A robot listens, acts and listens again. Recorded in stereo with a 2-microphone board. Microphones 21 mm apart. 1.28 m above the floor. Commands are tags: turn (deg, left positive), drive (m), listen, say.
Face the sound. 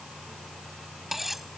<turn deg="-30"/>
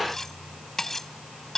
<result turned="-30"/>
<turn deg="15"/>
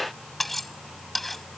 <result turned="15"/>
<turn deg="10"/>
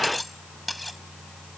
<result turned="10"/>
<say>Facing the cutlery clinking.</say>